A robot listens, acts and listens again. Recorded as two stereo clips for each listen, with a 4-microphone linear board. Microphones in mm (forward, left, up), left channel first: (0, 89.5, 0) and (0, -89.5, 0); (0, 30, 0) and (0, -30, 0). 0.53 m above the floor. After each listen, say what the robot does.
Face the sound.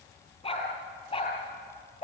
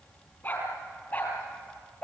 Turn 35° left.
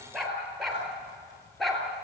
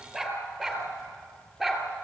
Found it: a dog barking, straight ahead, 2 to 4 m away.